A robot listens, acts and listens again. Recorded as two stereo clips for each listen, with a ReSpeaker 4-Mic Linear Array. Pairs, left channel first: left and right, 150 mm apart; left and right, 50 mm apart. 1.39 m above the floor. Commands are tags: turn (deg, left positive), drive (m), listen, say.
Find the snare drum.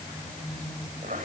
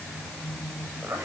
<listen/>
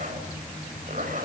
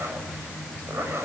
<listen/>
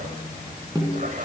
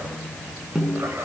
<turn deg="-20"/>
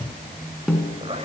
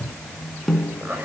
<say>Found it: a snare drum, straight ahead, over 4 m away.</say>